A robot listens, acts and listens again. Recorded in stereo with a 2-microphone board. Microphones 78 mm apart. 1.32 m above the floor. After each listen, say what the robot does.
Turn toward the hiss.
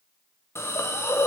Turn 35° left.
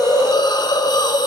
Turn 110° left.
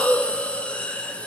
Turn 15° left.
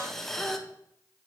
Facing the hiss.